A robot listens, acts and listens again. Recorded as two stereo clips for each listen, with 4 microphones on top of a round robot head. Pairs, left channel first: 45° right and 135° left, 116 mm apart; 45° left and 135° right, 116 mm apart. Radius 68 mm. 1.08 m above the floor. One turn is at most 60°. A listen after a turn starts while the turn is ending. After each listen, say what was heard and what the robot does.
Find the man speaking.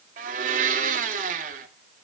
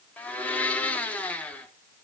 Keep listening.
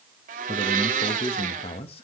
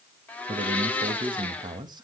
The man speaking: 80° right. Turn 60° right.
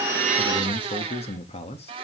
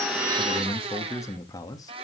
The man speaking is now 10° right. Turn 10° right.
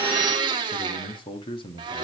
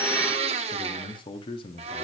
Facing the man speaking.